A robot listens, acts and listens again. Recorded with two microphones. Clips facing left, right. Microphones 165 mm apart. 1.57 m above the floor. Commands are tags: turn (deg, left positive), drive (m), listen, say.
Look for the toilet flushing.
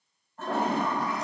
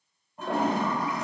<turn deg="-30"/>
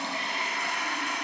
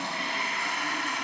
<turn deg="15"/>
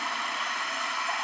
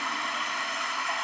<say>Found it: a toilet flushing, straight ahead.</say>